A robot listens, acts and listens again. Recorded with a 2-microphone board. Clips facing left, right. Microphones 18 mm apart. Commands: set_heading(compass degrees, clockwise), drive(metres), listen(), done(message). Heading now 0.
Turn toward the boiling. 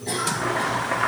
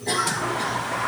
set_heading(290)
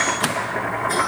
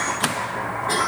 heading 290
set_heading(250)
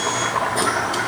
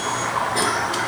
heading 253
done("Found it: boiling, straight ahead, 2 to 4 m away.")